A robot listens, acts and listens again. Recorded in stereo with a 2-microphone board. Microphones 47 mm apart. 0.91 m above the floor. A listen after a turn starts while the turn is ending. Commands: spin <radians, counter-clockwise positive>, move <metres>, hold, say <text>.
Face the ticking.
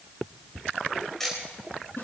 spin 0.52
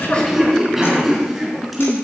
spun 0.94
hold
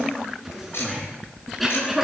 spin 2.01
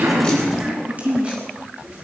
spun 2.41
spin -0.44
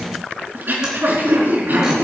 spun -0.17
spin -0.26
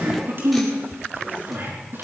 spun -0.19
say Facing where the ticking came from. I can't hear it now.